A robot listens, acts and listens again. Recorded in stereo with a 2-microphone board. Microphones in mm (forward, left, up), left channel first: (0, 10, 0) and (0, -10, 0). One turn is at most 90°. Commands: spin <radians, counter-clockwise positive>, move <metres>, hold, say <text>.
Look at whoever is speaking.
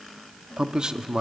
spin -0.70
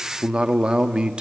spin -1.57
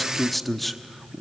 say Found it: a man speaking, straight ahead, under 1 m away.